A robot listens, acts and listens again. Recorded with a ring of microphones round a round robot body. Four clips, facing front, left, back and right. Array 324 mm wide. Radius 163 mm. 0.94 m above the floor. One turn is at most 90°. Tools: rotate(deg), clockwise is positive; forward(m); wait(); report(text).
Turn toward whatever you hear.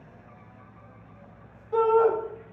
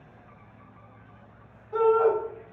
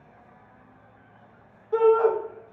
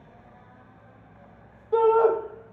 rotate(90)
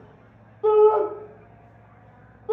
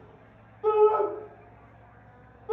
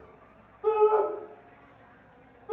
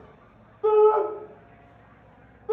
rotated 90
rotate(20)
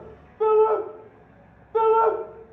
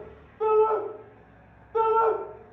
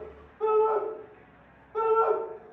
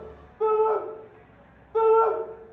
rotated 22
report("Facing the shout, under 1 m away.")